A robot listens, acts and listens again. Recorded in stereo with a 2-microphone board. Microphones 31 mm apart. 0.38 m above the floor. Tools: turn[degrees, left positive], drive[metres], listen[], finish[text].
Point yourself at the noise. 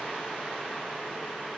Action: listen[]
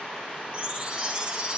Thought: The chime: about 30° right or 150° right.
Action: turn[-30]
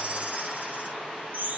Thought: So it is at 125° right.
Action: turn[-125]
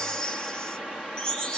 Thought: The chime is now 25° left.
Action: turn[25]
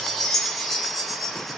Thought: The chime is now 10° left.
Action: turn[10]
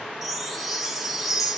Action: finish[Facing the chime.]